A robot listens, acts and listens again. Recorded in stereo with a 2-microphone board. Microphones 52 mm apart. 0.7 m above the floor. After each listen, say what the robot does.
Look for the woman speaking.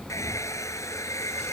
Keep listening.
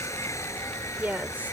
Turn 35° right.
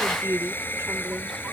Turn 120° right.
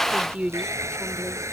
Turn 30° right.
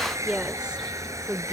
Turn 15° right.
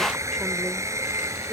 Keep listening.
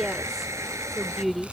Found it: a woman speaking, straight ahead.